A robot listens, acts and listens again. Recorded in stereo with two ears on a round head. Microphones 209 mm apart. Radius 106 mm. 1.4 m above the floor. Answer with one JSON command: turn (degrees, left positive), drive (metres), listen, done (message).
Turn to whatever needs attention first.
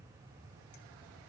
{"listen": true}
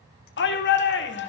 {"turn": 50}
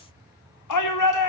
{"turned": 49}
{"turn": 80}
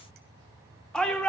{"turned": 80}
{"done": "Found it: a shout, straight ahead, 2 to 4 m away."}